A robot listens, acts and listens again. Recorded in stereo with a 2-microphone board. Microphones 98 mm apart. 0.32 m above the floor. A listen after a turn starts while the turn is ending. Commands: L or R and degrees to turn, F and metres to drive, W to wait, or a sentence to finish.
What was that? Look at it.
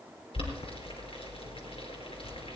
L70
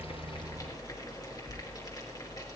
L35
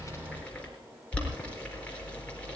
L10
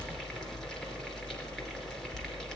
Facing the boiling, over 4 m away.